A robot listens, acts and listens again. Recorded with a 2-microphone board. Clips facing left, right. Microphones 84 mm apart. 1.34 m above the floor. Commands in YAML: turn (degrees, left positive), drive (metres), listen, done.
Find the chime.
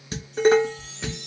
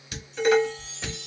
turn: 65
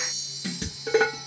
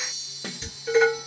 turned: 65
turn: 20
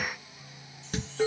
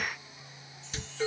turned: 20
listen: true
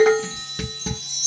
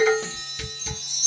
done: "Facing the chime."